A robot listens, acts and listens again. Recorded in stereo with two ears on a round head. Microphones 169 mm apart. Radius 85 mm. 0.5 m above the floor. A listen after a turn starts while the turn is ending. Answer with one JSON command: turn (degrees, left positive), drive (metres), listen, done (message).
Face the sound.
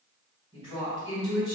{"turn": 25}
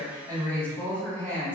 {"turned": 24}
{"turn": 10}
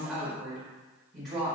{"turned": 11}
{"done": "Facing the woman speaking."}